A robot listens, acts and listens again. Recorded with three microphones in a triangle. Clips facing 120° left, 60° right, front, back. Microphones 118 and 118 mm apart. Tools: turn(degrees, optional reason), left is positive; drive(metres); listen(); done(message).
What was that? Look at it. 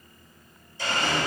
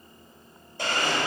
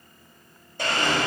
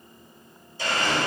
turn(degrees=-30, reason="The blender: 30° right.")
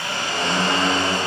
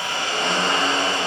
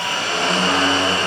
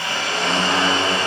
turn(degrees=10, reason="The blender is now 10° left.")
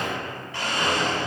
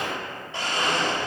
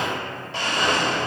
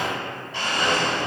done("Found it: a blender, straight ahead.")